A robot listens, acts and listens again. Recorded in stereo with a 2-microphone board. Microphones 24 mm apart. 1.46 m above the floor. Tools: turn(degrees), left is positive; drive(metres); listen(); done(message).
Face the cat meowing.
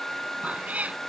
turn(degrees=-75)
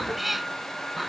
done("Facing the cat meowing.")